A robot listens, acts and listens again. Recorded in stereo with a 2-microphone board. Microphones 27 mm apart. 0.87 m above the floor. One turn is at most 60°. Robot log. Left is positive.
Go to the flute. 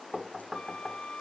note: The flute: about 50° left or 130° left.
cmd yaw +50
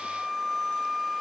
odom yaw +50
cmd fwd 1.0
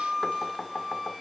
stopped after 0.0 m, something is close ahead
end: Blocked. The flute is further on, straight ahead.